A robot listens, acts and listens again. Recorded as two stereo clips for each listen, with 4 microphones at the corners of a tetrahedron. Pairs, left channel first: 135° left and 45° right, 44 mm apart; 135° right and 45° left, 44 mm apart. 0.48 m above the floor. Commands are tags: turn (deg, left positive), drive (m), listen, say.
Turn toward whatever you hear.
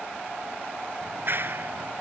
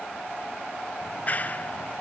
<turn deg="-80"/>
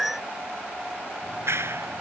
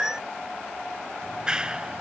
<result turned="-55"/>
<turn deg="-25"/>
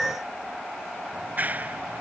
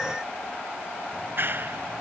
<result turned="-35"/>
<turn deg="10"/>
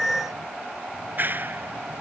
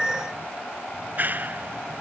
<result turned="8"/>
<say>Facing the clap.</say>